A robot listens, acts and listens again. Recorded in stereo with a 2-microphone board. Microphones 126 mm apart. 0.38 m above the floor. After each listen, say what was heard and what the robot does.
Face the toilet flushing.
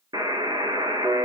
Keep listening.
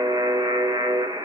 Keep listening.
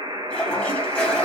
Turn 30° left.
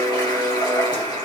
So it is at 140° left. Turn 140° left.
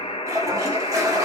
The toilet flushing is now 30° right. Turn 30° right.
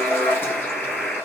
The toilet flushing is now 20° left. Turn 20° left.
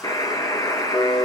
Keep listening.
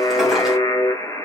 Keep listening.
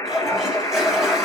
Found it: a toilet flushing, straight ahead.